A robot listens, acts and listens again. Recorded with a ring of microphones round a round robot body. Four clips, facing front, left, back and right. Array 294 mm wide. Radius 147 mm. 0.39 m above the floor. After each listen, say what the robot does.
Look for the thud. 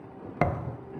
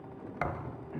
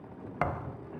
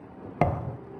Turn 55° right.
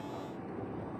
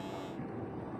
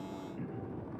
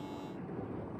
Facing where the thud came from. I can't hear it now.